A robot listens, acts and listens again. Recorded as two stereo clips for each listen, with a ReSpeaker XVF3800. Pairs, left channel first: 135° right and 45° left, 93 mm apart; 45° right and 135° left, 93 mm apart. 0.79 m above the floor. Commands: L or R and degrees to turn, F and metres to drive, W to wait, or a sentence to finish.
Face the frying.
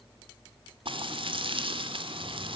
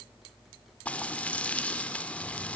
L30
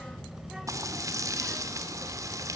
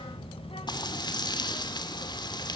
R10
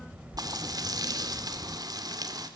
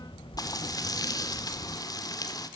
Facing the frying.